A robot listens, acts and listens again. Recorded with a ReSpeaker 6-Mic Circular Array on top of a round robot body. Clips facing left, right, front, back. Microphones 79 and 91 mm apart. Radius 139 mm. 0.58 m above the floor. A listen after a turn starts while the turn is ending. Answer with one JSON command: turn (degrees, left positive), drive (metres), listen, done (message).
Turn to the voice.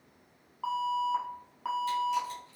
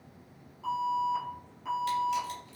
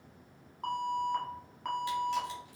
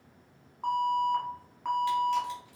{"listen": true}
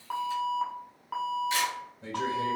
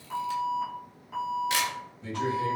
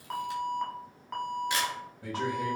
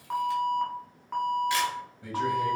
{"turn": 60}
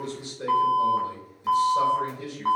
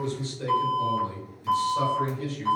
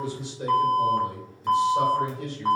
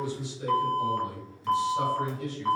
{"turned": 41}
{"turn": 20}
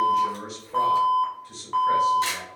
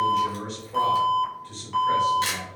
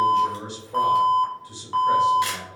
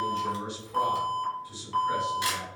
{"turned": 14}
{"done": "Facing the man speaking, 1 to 2 m away."}